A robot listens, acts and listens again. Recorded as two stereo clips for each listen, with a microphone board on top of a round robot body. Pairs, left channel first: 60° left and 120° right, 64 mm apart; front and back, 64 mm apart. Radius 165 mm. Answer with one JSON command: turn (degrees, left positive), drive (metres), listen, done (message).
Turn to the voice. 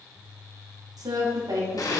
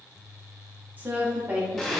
{"turn": -115}
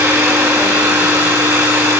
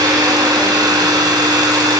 {"listen": true}
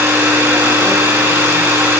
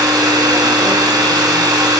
{"listen": true}
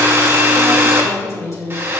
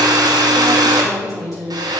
{"turn": 25}
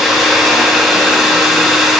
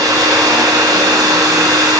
{"listen": true}
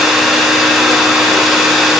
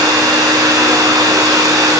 {"listen": true}
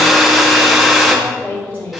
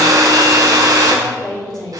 {"done": "Found it: a woman speaking, straight ahead."}